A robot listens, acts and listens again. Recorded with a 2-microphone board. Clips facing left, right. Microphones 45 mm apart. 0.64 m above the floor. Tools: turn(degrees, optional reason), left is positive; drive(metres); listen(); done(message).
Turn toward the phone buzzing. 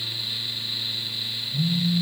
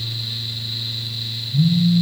turn(degrees=15, reason="The phone buzzing: about 15° left or 165° left.")
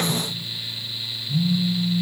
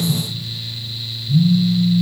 turn(degrees=150, reason="So it is at 150° left.")
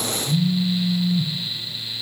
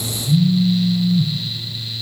turn(degrees=10, reason="The phone buzzing is now 10° left.")
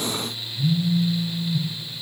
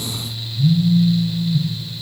done("Facing the phone buzzing, 1 to 2 m away.")